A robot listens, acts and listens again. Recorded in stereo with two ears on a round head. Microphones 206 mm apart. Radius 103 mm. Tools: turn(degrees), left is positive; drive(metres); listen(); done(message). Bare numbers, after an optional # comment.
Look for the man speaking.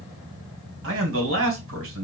# The man speaking: about 60° right or 120° right.
turn(-60)
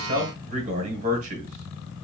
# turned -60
# So it is at 40° right.
turn(-40)
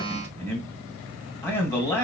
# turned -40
# The man speaking is now 10° left.
turn(10)
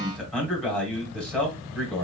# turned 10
done("Facing the man speaking, 1 to 2 m away.")